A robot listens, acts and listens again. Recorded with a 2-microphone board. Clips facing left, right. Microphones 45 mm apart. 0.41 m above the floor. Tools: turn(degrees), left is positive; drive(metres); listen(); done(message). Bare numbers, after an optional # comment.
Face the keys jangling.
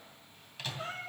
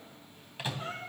listen()
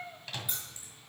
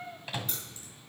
turn(30)
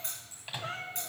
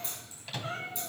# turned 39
# So it is at 135° left.
turn(135)
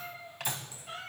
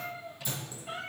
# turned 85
# Nothing new. It was at 50° left.
turn(50)
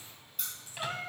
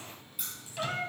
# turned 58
done("Facing the keys jangling, over 4 m away.")